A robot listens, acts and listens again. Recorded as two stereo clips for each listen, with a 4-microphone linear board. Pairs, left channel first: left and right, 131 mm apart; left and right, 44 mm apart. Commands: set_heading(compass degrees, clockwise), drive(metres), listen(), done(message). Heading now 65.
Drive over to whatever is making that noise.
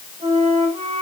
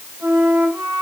set_heading(110)
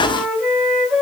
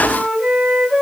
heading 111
drive(1.0)
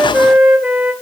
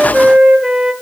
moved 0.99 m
drive(1.0)
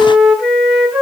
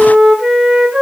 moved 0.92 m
drive(1.0)
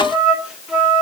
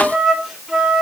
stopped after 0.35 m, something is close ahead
set_heading(121)
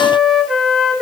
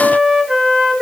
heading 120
done("I am next to the flute.")